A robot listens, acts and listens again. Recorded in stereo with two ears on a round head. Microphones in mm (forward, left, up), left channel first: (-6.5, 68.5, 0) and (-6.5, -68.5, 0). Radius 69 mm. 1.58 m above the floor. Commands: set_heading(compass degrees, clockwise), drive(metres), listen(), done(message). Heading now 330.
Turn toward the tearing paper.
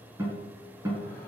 listen()
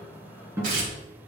set_heading(25)
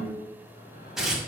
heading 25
done("Found it: tearing paper, straight ahead, 1 to 2 m away.")